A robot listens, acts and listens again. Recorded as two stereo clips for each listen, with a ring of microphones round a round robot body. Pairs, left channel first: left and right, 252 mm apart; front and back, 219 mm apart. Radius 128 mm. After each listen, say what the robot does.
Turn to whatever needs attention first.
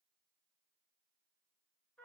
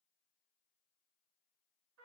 Keep listening.
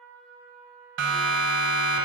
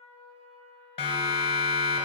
Turn 65° right.
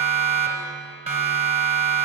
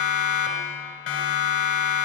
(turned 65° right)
Turn 25° right.
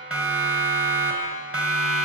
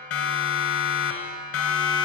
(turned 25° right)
Facing the siren, 2 to 4 m away.